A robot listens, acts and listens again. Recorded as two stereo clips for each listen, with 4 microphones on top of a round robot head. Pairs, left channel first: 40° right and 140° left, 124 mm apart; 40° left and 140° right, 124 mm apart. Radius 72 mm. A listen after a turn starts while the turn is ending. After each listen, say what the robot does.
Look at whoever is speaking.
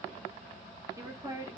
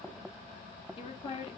Turn 75° left.
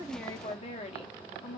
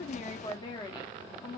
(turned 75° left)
Turn 10° right.
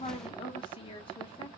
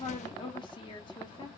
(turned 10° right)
Facing the woman speaking.